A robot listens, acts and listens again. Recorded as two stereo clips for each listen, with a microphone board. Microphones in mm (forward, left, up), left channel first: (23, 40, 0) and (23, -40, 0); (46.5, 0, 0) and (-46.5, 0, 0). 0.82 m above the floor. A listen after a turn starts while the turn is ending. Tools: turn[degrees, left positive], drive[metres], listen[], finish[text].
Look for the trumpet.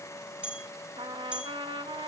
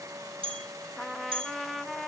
Thought: The trumpet: 90° right.
Action: turn[-90]
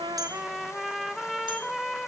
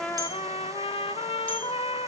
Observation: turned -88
Action: finish[Facing the trumpet, under 1 m away.]